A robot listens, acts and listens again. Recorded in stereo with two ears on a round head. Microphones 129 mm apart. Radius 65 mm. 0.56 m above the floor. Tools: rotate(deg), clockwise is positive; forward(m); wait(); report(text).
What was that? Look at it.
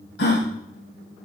rotate(-90)
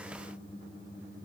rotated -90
report("I heard a gasp from this way, but can't make it out now.")